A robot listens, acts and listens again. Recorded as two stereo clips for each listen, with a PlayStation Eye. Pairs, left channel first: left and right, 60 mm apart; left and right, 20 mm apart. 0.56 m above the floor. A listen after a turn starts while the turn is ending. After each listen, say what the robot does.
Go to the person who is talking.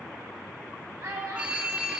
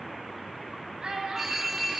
Turn 55° right.
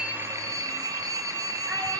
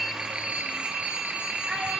Keep listening.
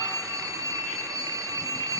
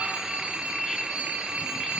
Keep listening.
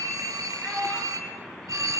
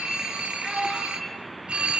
Drive 1.0 m forward.
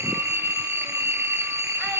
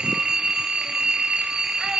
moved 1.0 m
Keep listening.
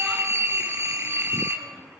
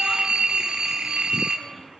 Keep listening.
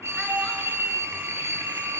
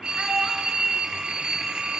I heard a child speaking from this way, but can't make it out now. I did not reach it.